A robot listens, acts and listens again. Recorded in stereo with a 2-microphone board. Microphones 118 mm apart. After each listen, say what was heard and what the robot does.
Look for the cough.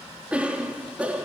Turn 30° right.
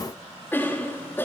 So it is at 20° left. Turn 20° left.
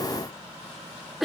Found it: a cough, straight ahead, 2 to 4 m away.